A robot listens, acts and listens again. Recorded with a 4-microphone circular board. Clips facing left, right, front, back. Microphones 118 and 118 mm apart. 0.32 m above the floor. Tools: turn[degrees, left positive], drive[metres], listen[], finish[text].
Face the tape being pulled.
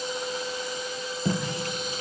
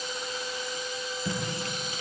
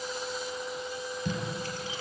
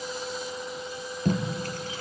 Thought: The tape being pulled: 140° left.
Action: turn[140]
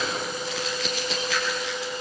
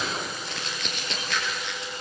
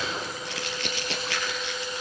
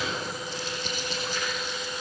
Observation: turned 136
Action: finish[Found it: tape being pulled, straight ahead, 2 to 4 m away.]